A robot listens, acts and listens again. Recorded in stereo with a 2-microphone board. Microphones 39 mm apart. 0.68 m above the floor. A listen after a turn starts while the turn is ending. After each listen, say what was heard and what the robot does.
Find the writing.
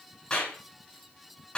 Keep listening.
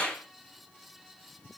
Keep listening.
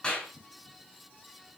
I can't make out writing, only a clap.